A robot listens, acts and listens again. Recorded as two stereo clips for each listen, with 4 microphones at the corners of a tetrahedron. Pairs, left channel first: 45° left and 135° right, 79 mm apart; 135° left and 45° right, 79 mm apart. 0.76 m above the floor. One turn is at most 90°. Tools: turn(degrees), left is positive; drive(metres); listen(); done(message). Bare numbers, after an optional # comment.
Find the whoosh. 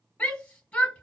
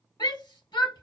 listen()
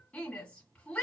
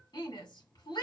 listen()
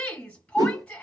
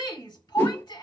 # The whoosh: 165° right.
turn(-90)
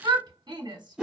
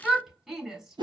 # The whoosh is now 55° right.
turn(-55)
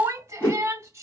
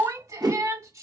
# The whoosh is now 10° right.
turn(-10)
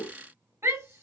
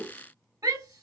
done("Found it: a whoosh, straight ahead, 1 to 2 m away.")